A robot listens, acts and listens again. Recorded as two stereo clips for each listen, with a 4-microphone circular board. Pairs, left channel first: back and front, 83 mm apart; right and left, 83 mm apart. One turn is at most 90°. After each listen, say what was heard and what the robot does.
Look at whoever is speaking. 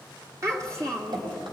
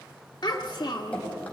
The child speaking: 50° right. Turn 50° right.
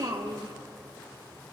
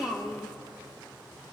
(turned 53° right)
Facing the child speaking.